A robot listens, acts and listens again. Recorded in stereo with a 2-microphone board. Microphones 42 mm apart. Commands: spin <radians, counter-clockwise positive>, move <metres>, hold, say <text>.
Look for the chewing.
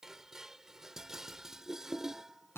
hold
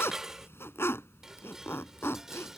hold
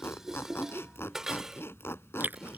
spin -0.79
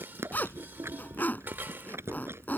spin -1.57
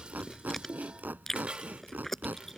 spin 0.17
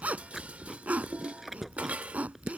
say Facing the chewing.